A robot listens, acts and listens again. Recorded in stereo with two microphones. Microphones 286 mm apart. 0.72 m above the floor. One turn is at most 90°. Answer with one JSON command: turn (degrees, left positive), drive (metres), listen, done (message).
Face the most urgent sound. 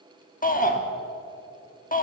{"turn": 30}
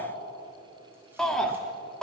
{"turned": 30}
{"done": "Found it: a shout, straight ahead, 1 to 2 m away."}